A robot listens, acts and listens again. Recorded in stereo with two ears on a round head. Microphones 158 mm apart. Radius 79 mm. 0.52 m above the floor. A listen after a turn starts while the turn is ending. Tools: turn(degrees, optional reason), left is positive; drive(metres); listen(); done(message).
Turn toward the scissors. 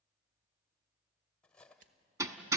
turn(degrees=-50, reason="The scissors: about 50° right or 130° right.")
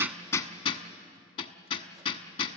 listen()
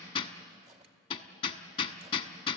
listen()
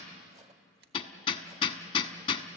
turn(degrees=-75, reason="So it is at 75° right.")
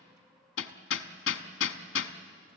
listen()
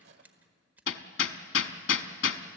turn(degrees=-10, reason="The scissors is now 10° right.")
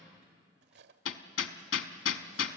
listen()
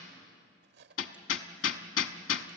listen()
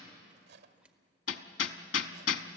done("Found it: scissors, straight ahead.")